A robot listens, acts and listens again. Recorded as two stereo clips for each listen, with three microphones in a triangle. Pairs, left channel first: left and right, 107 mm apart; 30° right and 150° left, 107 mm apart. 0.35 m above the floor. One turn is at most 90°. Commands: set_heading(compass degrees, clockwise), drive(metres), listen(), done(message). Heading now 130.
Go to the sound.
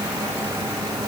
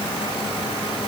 listen()
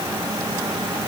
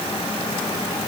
listen()
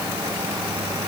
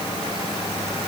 done("I can't make out anything.")